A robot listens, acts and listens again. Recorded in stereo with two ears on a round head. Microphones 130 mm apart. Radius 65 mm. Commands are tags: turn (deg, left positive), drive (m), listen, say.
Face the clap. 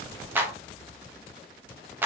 <turn deg="-30"/>
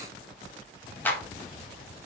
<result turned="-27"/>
<turn deg="15"/>
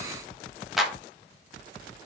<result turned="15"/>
<say>Facing the clap, 1 to 2 m away.</say>